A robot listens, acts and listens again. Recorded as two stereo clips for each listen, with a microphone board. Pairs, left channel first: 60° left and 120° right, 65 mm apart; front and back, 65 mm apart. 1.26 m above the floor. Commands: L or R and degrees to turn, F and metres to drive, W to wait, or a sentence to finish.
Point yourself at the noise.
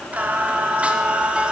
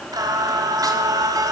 L165
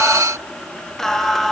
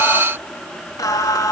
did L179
R25
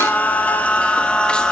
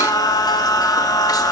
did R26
R15
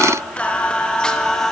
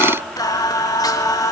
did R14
R20
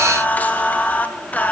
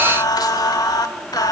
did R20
Facing the singing.